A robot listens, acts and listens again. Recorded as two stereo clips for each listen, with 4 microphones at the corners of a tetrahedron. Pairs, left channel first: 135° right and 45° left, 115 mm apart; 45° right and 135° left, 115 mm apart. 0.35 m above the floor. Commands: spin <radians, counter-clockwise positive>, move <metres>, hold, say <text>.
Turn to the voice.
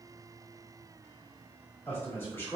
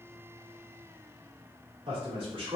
spin 2.79
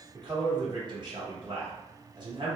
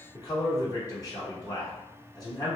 say Found it: a man speaking, straight ahead.